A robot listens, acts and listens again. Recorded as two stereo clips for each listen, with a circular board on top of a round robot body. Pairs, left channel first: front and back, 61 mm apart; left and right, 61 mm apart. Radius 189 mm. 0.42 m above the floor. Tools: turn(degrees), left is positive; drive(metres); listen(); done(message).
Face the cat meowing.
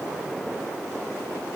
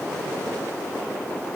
listen()
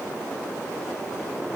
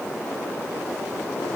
listen()
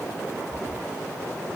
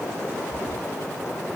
turn(degrees=-115)
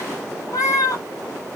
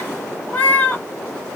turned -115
turn(degrees=25)
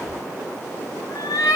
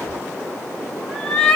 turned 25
turn(degrees=10)
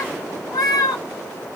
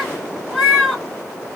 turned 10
done("Found it: a cat meowing, straight ahead.")